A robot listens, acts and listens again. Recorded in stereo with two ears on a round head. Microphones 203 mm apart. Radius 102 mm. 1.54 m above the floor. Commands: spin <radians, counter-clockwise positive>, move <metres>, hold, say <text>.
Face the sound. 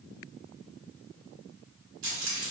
spin -0.96
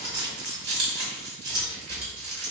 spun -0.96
spin -0.96
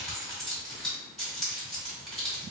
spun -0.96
say Found it: keys jangling, straight ahead, 1 to 2 m away.